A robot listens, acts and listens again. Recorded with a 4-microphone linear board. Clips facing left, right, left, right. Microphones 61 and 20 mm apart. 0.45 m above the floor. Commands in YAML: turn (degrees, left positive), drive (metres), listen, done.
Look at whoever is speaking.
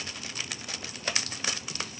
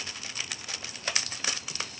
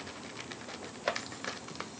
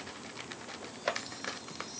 listen: true
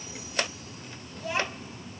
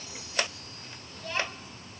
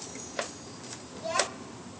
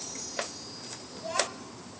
turn: 30
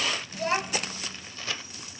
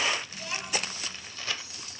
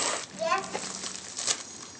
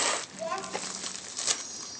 turn: 135
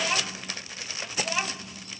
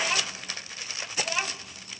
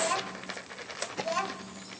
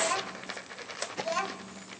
done: "Facing the child speaking, 1 to 2 m away."